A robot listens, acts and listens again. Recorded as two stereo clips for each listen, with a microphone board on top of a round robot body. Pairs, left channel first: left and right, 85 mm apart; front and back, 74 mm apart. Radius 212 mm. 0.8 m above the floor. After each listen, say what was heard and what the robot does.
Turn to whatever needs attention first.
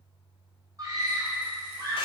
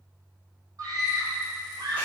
The scream: 140° right. Turn 140° right.
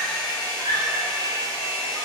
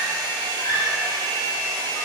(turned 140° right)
The scream is now 30° right. Turn 30° right.
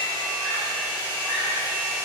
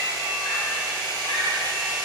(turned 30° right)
Keep listening.
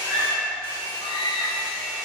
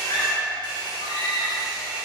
Found it: a scream, straight ahead, 1 to 2 m away.